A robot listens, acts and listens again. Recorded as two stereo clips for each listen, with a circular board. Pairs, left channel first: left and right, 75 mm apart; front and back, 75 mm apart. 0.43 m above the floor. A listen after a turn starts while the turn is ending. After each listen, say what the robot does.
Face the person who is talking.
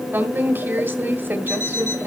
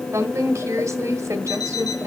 Turn 145° right.
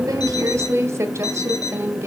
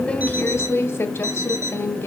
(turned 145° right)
Turn 50° right.
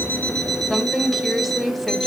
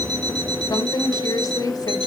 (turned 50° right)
Found it: a woman speaking, straight ahead.